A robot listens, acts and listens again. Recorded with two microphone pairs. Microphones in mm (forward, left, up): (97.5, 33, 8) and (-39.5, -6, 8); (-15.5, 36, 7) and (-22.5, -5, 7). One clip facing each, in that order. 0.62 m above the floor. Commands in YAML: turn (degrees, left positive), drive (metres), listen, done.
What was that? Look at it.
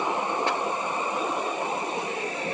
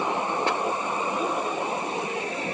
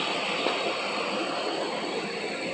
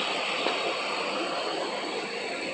listen: true
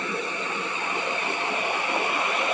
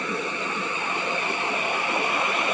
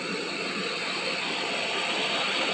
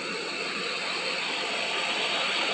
listen: true
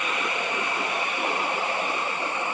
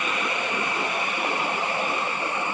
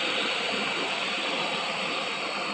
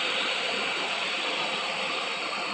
done: "I can't make out anything to turn to."